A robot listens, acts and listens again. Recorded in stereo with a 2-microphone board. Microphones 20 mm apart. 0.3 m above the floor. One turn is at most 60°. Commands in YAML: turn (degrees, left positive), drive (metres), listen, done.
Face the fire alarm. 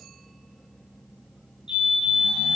turn: -60
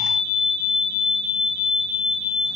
turn: -50
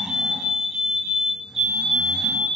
done: "Facing the fire alarm."